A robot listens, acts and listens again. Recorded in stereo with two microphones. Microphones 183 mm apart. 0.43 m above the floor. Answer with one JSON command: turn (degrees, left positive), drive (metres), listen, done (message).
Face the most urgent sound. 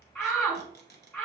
{"turn": 30}
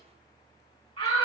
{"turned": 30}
{"turn": 135}
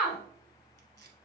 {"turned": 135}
{"done": "Found it: a shout, straight ahead, 1 to 2 m away."}